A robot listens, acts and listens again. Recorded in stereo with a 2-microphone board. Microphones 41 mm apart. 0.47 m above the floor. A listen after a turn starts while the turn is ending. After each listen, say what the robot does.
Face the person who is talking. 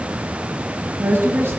Turn 75° right.
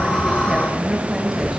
Turn 15° right.
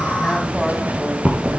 Keep listening.
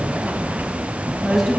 Facing the woman speaking, 2 to 4 m away.